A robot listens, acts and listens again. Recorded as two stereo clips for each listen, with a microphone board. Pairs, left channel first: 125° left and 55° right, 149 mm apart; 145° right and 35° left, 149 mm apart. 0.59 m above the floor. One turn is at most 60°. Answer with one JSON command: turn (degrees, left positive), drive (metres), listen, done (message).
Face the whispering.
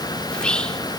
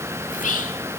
{"turn": -60}
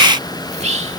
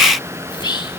{"turn": -60}
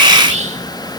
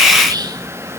{"turn": -25}
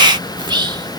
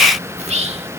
{"done": "Facing the whispering."}